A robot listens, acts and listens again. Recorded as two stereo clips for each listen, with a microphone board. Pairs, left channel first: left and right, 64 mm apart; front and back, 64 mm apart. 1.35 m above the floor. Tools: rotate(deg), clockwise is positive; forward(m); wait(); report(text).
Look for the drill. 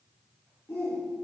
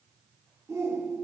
wait()
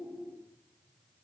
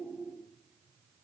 wait()
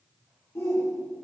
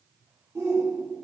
report("I can't make out a drill to turn to.")